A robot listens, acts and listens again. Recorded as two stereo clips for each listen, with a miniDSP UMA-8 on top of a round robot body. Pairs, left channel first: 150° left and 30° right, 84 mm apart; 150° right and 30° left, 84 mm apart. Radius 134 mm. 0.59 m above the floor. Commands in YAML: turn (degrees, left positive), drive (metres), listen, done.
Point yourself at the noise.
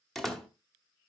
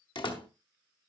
turn: -125
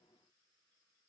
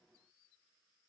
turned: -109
turn: -15
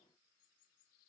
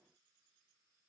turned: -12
done: "Facing where the door slam came from. I can't hear it now."